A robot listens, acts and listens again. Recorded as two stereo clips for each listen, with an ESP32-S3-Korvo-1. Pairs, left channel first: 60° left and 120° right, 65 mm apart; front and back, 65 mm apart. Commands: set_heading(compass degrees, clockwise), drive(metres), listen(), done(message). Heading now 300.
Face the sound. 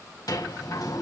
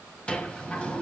set_heading(225)
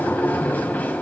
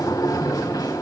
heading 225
done("Found it: a sliding door, straight ahead.")